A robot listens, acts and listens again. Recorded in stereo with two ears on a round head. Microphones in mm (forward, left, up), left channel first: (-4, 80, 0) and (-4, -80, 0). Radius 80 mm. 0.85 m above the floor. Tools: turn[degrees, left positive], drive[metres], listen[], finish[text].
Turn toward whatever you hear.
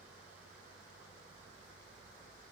Action: listen[]
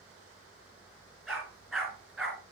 Action: turn[-30]
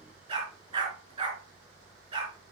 Thought: So it is at 145° right.
Action: turn[-145]
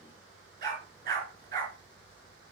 Thought: The dog barking is now 45° right.
Action: turn[-45]
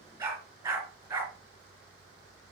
Thought: The dog barking is now 15° right.
Action: turn[-15]
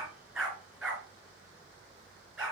Action: finish[Found it: a dog barking, straight ahead, 2 to 4 m away.]